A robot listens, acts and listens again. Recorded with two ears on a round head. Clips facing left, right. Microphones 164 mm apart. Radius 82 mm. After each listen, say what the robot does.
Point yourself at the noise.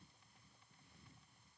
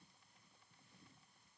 Keep listening.
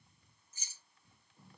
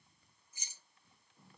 Turn 30° right.
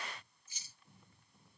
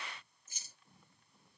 Turn 135° right.
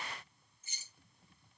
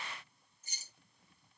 Turn 35° right.
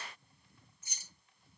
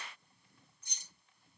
Facing the keys jangling, 1 to 2 m away.